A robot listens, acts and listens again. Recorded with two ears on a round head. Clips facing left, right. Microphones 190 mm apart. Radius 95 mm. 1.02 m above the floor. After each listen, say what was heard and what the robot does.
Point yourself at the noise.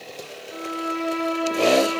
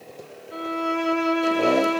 The violin: about 20° right or 160° right. Turn 20° right.
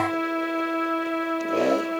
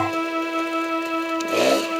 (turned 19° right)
So it is at 145° right. Turn 145° right.
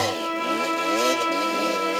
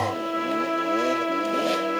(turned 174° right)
The violin is now 30° left. Turn 30° left.
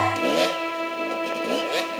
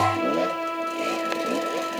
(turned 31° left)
Found it: a violin, straight ahead.